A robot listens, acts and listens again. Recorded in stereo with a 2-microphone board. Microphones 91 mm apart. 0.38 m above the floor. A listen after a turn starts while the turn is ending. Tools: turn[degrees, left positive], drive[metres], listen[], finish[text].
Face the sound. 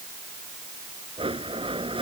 Action: turn[-90]
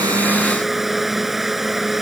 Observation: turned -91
Action: finish[Facing the blender.]